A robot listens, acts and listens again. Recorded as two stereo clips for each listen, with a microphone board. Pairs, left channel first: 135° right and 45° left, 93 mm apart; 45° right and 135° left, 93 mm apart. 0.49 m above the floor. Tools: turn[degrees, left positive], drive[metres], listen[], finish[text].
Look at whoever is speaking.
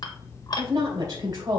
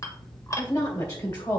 Action: finish[Found it: a woman speaking, straight ahead, 2 to 4 m away.]